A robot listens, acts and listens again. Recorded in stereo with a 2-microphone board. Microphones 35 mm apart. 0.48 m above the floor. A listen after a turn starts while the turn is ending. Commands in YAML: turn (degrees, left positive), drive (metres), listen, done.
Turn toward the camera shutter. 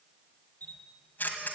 turn: 65
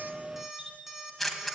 done: "Facing the camera shutter, 1 to 2 m away."